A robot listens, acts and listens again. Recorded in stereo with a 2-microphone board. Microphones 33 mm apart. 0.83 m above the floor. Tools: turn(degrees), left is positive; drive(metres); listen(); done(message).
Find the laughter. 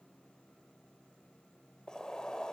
listen()
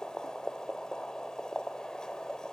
listen()
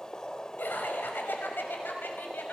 turn(degrees=90)
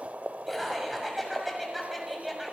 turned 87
done("Found it: laughter, straight ahead.")